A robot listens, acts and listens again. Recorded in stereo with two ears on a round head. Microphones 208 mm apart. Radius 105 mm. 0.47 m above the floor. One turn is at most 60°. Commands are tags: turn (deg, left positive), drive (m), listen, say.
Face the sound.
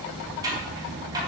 <turn deg="-15"/>
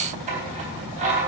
<turn deg="-60"/>
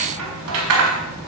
<turn deg="-60"/>
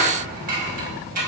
<turn deg="-40"/>
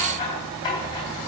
<turn deg="20"/>
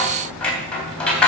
<say>Found it: scissors, straight ahead, 2 to 4 m away.</say>